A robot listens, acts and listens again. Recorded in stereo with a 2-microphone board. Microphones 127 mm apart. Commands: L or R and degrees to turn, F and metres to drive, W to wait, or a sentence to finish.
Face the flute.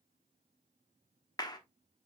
W
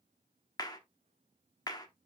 W
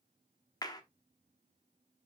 I can't make out a flute to turn to.